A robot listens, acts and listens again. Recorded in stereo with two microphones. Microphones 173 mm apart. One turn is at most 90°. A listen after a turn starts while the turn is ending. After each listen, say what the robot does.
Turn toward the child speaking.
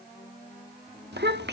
Turn 90° right.
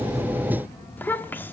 Turn 10° left.
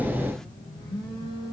Keep listening.
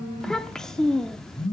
Found it: a child speaking, straight ahead.